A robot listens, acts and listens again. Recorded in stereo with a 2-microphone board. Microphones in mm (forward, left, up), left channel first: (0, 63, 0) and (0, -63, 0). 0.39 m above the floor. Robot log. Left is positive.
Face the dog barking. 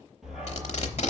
cmd yaw +30
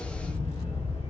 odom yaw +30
note: So it is at 130° left.
cmd yaw +130
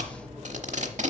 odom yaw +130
end: Facing the dog barking.